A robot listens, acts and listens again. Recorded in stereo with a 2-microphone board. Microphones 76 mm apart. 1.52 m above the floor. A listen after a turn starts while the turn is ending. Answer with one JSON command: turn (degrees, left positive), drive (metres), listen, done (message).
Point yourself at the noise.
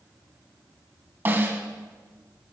{"turn": -30}
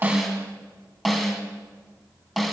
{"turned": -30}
{"done": "Facing the snare drum."}